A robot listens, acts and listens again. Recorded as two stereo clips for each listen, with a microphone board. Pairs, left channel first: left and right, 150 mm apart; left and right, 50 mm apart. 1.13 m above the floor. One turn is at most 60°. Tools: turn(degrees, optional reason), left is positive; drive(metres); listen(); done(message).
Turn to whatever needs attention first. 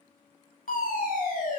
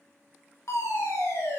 turn(degrees=60, reason="The fire alarm: about 65° left or 115° left.")
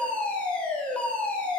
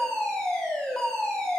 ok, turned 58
turn(degrees=10, reason="So it is at 10° left.")
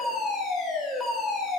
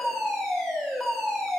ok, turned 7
done("Found it: a fire alarm, straight ahead, over 4 m away.")